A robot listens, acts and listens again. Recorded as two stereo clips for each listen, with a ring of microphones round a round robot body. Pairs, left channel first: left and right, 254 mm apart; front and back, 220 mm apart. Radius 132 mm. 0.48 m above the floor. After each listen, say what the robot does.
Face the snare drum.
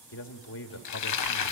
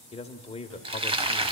Keep listening.
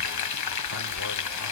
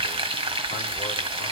Keep listening.
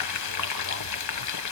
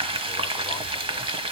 I can't make out a snare drum to turn to.